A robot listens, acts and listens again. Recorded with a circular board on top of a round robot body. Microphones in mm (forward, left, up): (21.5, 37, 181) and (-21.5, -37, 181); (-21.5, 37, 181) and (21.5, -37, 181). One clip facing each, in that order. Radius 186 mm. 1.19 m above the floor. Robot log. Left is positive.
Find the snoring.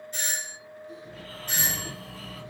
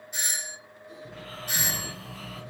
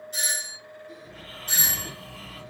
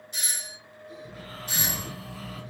note: The snoring: 110° right.
cmd yaw -110
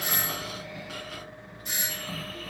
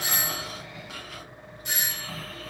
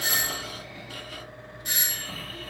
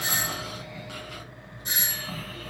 note: The snoring is now 35° right.
cmd yaw -35
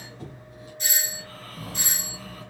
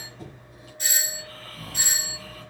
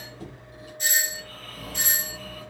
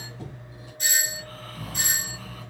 end: Facing the snoring.